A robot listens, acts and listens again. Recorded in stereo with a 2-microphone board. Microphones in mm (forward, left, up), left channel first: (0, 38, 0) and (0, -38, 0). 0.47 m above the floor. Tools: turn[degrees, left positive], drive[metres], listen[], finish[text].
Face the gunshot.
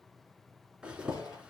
Thought: The gunshot: about 50° left or 130° left.
Action: turn[50]
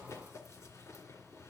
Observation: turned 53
Action: listen[]
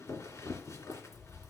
Action: finish[I heard a gunshot, but can't make it out now. It was about 5° right or 80° left.]